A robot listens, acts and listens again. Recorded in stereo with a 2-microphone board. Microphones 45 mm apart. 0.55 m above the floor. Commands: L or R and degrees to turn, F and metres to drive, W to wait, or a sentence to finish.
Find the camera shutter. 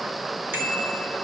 W
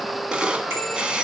R25
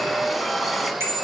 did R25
W
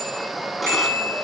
W
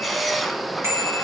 Found it: a camera shutter, straight ahead, 1 to 2 m away.